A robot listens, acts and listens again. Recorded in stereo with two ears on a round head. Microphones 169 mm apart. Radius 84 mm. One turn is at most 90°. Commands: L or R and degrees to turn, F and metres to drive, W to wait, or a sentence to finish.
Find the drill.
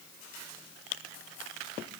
W
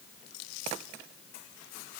W
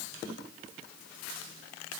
I can't make out a drill to turn to.